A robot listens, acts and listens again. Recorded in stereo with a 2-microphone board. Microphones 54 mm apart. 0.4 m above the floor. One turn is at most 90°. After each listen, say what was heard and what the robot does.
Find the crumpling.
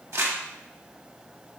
The crumpling: about 55° right or 125° right. Turn 55° right.
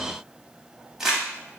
Found it: crumpling, straight ahead.